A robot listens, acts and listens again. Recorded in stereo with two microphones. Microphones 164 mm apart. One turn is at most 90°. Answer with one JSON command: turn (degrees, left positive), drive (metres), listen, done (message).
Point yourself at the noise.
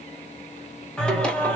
{"turn": 30}
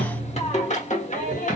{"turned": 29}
{"turn": 90}
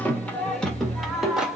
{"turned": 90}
{"done": "Facing the singing."}